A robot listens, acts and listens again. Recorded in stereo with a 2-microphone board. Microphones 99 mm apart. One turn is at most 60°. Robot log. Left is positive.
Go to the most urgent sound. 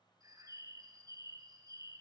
cmd idle
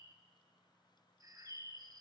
cmd idle
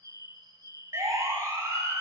note: The siren: about 30° right or 150° right.
cmd yaw -30
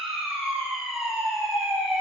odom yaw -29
cmd fwd 1.0
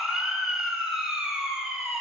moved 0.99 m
note: The siren is now 10° right.
cmd yaw -10
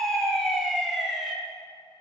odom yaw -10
cmd fwd 1.0
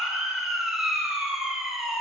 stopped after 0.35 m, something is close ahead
end: I am next to the siren.